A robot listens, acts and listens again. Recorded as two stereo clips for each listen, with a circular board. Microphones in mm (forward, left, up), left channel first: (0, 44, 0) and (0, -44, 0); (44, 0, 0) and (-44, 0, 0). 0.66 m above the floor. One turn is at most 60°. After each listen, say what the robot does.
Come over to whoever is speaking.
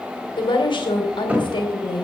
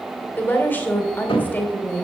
Turn 60° left.
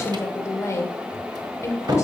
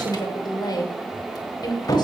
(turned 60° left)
Turn 35° left.
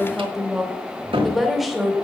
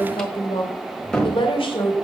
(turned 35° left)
Drive 1.0 m forward.
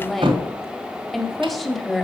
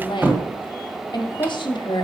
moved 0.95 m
Drive 1.0 m forward.
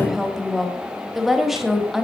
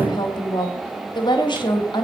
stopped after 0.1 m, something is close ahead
I am next to the woman speaking.